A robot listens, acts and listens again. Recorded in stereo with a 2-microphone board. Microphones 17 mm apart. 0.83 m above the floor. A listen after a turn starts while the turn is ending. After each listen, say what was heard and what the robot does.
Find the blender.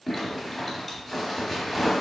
Keep listening.
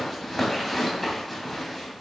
Keep listening.
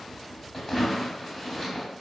I can't make out a blender, only a zipper.